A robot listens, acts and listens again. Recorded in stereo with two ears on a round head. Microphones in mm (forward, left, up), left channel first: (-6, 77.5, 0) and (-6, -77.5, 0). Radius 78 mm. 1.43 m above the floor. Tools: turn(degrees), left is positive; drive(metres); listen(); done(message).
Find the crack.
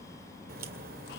turn(degrees=-60)
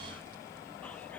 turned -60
listen()
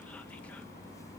done("I heard a crack, but can't make it out now. It was about straight ahead or 60° right.")